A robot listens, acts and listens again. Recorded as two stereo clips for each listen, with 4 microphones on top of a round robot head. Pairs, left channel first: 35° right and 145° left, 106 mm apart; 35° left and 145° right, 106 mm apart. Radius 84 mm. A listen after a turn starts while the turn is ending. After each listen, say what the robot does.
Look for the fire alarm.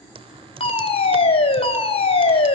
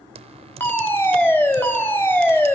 Turn 30° right.
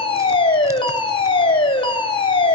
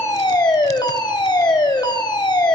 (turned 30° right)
Found it: a fire alarm, straight ahead, 2 to 4 m away.